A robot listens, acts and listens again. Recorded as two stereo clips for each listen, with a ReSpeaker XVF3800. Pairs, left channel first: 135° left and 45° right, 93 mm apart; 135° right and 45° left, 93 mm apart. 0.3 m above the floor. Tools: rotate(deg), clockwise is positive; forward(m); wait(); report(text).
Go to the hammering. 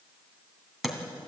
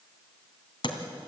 rotate(130)
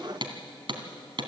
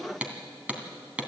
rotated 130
rotate(30)
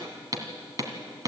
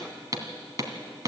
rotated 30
forward(1.0)
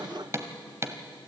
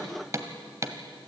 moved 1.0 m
forward(1.0)
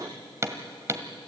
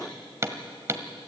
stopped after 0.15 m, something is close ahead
report("Arrived at the hammering, straight ahead.")